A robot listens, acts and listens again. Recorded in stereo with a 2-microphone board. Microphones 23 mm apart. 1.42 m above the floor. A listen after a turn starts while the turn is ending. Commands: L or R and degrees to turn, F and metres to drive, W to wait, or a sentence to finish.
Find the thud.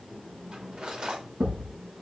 R70
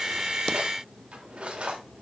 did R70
W
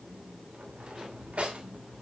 I heard a thud, but can't make it out now. It was about straight ahead or 40° right.